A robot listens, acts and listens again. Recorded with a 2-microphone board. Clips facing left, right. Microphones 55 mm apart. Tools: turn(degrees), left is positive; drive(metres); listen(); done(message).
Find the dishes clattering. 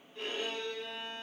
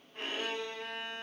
listen()
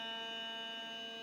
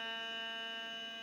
listen()
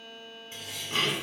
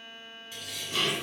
turn(degrees=35)
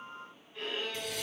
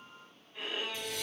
turn(degrees=110)
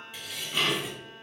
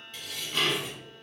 turn(degrees=10)
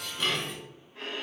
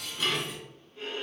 done("Found it: dishes clattering, straight ahead, 1 to 2 m away.")